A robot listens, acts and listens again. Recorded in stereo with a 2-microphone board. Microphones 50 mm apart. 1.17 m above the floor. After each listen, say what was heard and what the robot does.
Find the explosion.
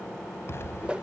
The explosion: about 50° left or 130° left. Turn 50° left.
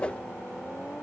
Keep listening.
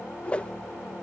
I heard an explosion, but can't make it out now. It was about straight ahead or 80° left.